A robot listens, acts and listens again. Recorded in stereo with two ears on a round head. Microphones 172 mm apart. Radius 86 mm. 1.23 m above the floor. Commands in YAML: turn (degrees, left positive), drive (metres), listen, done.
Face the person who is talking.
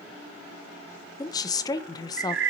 turn: 20
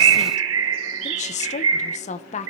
turn: 140
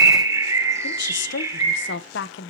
turn: 65
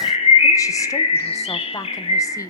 turn: 15
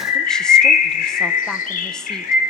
listen: true
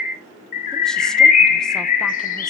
listen: true
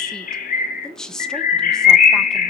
done: "Facing the woman speaking, under 1 m away."